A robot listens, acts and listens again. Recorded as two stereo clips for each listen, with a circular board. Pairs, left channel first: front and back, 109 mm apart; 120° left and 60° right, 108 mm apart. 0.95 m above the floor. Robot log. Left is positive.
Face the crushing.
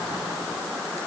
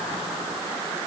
cmd idle
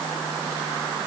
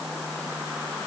cmd idle
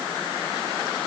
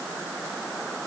end: I can't make out crushing to turn to.